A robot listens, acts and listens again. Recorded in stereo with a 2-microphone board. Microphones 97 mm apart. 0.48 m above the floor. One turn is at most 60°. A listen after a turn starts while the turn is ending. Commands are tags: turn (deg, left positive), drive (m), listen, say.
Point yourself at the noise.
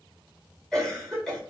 <turn deg="30"/>
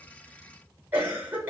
<turn deg="-25"/>
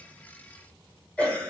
<turn deg="15"/>
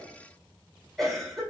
<say>Found it: a cough, straight ahead.</say>